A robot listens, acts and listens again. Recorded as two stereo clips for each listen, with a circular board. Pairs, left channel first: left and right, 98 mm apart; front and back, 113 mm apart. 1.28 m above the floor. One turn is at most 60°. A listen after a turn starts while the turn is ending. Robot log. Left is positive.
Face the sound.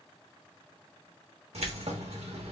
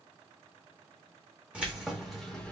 note: The keys jangling: 80° right.
cmd yaw -60
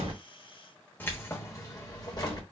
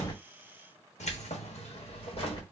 note: The keys jangling is now 45° left.
cmd yaw +45
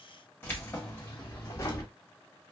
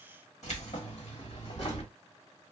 note: The keys jangling is now 30° left.
cmd yaw +30
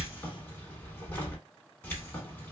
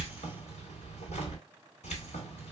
note: The keys jangling is now 20° left.
cmd yaw +20
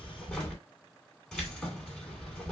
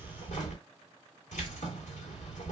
end: Found it: keys jangling, straight ahead.